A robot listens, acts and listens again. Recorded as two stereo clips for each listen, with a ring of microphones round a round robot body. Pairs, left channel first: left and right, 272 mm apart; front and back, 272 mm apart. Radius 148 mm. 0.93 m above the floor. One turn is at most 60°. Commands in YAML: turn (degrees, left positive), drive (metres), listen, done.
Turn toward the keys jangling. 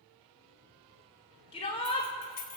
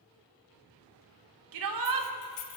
turn: 35
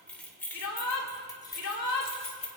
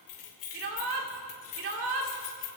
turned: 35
turn: 25
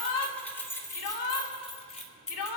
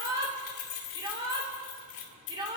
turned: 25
turn: 25
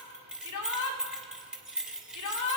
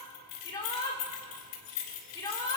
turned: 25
done: "Facing the keys jangling."